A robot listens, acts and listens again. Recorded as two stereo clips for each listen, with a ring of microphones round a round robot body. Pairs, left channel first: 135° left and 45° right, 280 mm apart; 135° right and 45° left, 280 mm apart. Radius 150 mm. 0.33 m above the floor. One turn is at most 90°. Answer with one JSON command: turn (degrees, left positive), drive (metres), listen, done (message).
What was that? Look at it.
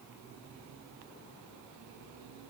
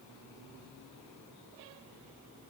{"listen": true}
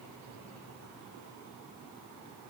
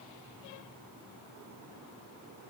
{"listen": true}
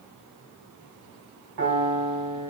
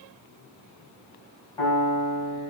{"turn": -65}
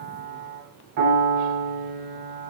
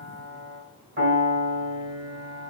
{"turn": -15}
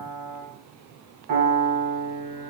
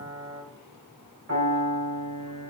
{"done": "Facing the piano."}